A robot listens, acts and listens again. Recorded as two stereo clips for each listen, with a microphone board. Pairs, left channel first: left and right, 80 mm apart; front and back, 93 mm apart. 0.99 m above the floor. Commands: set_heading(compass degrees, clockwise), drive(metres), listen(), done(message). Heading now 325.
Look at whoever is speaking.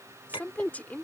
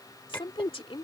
set_heading(305)
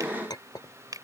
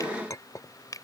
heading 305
listen()
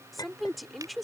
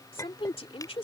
done("Facing the woman speaking.")